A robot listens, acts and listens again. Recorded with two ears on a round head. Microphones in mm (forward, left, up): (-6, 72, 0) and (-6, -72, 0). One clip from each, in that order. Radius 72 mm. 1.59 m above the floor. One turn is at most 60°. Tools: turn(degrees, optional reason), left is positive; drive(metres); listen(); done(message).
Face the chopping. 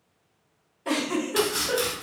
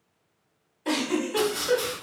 turn(degrees=60)
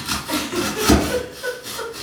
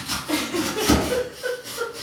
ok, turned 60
turn(degrees=30, reason="So it is at 30° left.")
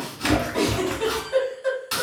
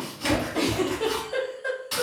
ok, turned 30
turn(degrees=20, reason="The chopping is now 20° left.")
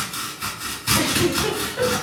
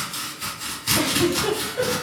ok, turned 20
done("Found it: chopping, straight ahead.")